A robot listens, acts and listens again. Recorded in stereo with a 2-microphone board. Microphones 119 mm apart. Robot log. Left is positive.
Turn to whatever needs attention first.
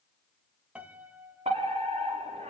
note: The fire alarm: about 65° right or 115° right.
cmd yaw -65
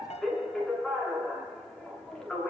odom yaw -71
end: Facing the fire alarm, over 4 m away.